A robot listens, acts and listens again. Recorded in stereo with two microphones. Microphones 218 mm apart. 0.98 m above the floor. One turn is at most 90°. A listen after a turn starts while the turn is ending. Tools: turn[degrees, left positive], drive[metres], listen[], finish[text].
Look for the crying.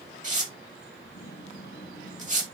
Action: listen[]
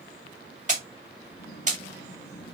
Action: listen[]
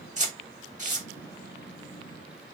Action: finish[I can't make out crying to turn to.]